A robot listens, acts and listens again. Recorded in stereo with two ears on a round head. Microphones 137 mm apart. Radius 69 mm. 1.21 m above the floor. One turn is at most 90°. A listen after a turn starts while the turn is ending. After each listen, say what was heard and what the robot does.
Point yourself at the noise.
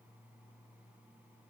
Keep listening.
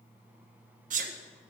The sneeze: about 55° right or 125° right. Turn 55° right.
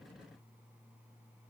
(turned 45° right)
Keep listening.
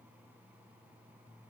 I heard a sneeze, but can't make it out now. It was about 10° right or 80° right.